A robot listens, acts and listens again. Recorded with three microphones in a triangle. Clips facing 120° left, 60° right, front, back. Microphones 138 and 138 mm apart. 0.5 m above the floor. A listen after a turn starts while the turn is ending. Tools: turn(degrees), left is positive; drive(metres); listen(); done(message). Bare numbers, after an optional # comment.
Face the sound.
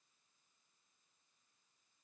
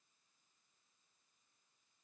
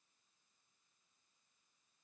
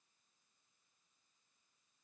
listen()
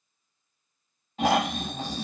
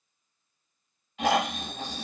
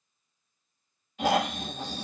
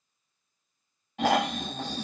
# The snoring: 170° left.
turn(170)
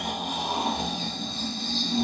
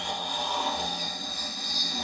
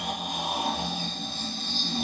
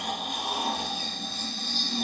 # The snoring is now 60° left.
turn(60)
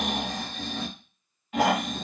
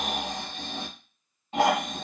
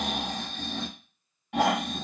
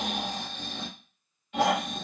done("Facing the snoring.")